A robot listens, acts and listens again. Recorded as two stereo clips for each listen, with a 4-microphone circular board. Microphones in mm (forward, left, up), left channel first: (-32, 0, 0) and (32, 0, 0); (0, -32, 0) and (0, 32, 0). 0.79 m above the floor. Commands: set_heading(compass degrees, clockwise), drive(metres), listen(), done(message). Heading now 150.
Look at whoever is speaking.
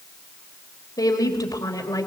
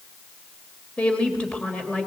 set_heading(310)
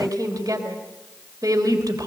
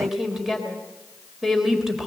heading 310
done("Facing the woman speaking, 2 to 4 m away.")